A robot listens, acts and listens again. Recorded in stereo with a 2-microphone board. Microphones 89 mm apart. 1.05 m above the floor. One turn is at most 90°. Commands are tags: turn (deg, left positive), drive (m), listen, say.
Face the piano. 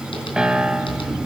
<turn deg="-30"/>
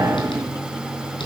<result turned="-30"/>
<listen/>
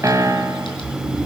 <turn deg="-90"/>
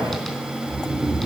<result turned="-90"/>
<turn deg="-50"/>
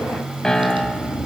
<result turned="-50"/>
<say>Facing the piano, 1 to 2 m away.</say>